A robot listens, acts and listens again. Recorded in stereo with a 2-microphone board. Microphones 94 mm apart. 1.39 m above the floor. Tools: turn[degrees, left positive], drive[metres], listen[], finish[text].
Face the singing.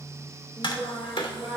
Thought: The singing: about 15° left or 165° left.
Action: turn[15]
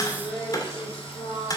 Thought: The singing: about 35° left or 145° left.
Action: turn[35]
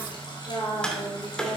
Thought: So it is at 105° left.
Action: turn[105]
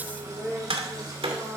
Action: finish[Facing the singing.]